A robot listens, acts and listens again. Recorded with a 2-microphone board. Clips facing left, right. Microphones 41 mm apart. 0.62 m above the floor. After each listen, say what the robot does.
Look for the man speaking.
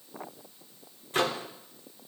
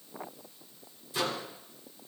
Keep listening.
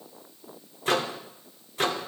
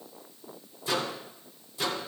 Keep listening.
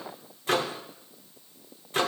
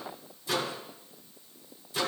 I can't make out a man speaking to turn to.